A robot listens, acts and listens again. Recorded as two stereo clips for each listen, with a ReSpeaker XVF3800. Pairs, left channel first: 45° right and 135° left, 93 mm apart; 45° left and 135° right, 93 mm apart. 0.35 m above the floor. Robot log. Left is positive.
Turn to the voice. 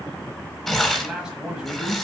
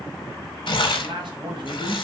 note: The man speaking: 145° right.
cmd yaw -145
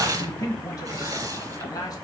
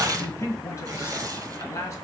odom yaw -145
end: Found it: a man speaking, straight ahead, 1 to 2 m away.